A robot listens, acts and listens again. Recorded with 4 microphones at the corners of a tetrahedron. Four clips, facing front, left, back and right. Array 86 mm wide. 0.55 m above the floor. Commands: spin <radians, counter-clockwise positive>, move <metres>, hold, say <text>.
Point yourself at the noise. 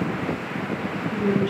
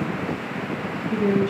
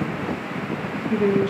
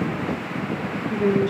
spin -2.79
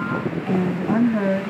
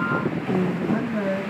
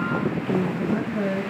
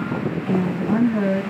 spin -0.52
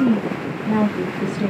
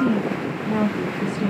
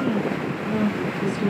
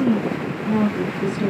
spin -0.35
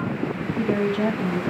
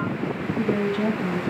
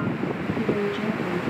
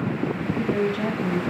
spin -0.17
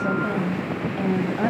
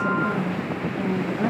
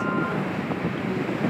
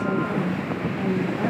say Found it: a woman speaking, straight ahead, 2 to 4 m away.